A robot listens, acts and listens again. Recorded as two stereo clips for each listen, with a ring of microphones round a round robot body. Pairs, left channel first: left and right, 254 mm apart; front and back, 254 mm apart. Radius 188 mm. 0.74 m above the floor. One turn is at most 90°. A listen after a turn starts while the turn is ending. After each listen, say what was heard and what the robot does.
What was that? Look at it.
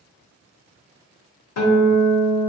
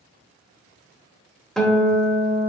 The guitar: 90° left. Turn 90° left.
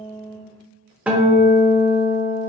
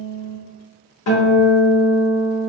Facing the guitar.